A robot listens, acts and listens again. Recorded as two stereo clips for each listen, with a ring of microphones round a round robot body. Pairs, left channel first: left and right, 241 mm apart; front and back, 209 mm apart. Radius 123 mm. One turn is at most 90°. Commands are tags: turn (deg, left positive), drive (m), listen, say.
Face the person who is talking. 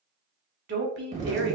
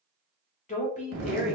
<turn deg="-55"/>
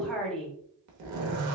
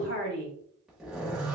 <say>Found it: a woman speaking, straight ahead, 1 to 2 m away.</say>